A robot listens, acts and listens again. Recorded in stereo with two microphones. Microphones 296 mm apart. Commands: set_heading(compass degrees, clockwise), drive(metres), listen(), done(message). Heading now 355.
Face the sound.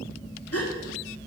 set_heading(300)
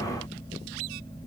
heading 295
listen()
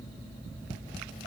done("I heard a gasp, but can't make it out now. It was about 5° right or 65° left.")